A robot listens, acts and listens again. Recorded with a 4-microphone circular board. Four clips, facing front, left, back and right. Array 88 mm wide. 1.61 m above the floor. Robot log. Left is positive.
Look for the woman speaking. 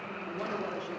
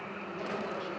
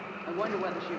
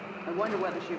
note: The woman speaking: 120° right.
cmd yaw -120
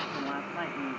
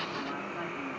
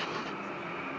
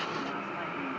cmd idle
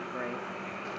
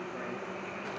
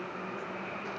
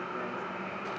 cmd idle
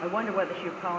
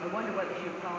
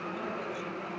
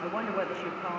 end: Found it: a woman speaking, straight ahead, 2 to 4 m away.